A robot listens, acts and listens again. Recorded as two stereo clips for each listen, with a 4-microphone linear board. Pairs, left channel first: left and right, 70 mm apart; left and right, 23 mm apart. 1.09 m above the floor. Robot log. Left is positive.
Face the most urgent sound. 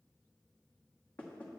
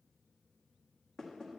cmd idle
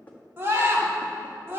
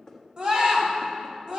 note: The scream: about 35° right or 145° right.
cmd yaw -35
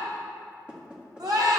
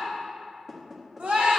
note: So it is at 110° right.
cmd yaw -110
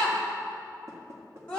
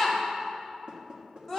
note: The scream is now 15° left.
cmd yaw +15
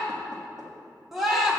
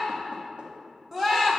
end: Facing the scream.